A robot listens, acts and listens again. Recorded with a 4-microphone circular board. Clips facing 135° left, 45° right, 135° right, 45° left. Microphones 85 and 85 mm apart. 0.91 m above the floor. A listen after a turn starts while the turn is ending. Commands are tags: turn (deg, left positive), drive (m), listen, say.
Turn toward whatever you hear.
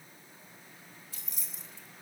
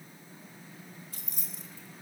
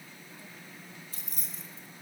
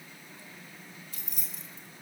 <turn deg="-80"/>
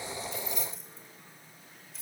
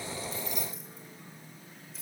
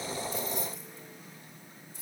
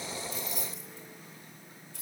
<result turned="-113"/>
<turn deg="45"/>
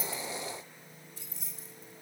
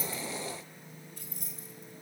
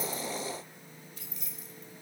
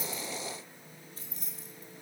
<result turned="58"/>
<say>Facing the keys jangling, 2 to 4 m away.</say>